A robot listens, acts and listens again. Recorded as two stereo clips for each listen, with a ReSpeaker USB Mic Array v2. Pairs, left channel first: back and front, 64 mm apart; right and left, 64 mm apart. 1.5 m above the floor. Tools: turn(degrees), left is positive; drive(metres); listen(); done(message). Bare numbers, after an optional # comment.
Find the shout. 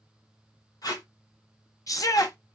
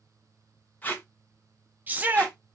# The shout: 150° left.
turn(150)
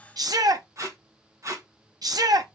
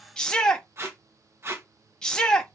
# The shout is now 15° right.
turn(-15)
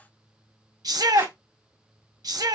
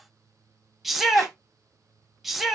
done("Found it: a shout, straight ahead, under 1 m away.")